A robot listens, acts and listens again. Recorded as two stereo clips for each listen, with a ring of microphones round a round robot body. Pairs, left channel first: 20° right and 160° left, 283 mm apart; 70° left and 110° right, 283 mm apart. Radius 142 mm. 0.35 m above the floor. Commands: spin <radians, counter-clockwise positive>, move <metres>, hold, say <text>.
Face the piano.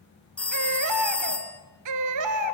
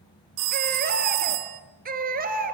hold
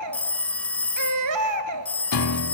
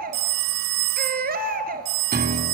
spin -0.96
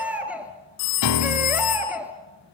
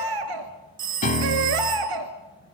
say Found it: a piano, straight ahead, 1 to 2 m away.